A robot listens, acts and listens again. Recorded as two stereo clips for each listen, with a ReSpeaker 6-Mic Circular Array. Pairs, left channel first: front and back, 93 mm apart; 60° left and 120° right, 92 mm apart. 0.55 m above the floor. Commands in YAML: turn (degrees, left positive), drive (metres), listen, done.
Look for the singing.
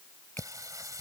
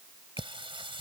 turn: -130
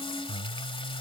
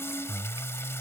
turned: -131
done: "Found it: singing, straight ahead."